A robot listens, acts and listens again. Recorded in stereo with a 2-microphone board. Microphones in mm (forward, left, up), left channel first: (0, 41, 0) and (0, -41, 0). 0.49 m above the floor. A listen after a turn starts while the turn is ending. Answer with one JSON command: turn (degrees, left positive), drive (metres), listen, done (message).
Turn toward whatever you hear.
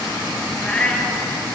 {"turn": 30}
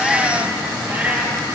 {"turn": -20}
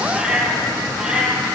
{"turn": -10}
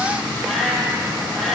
{"done": "Facing the cat meowing."}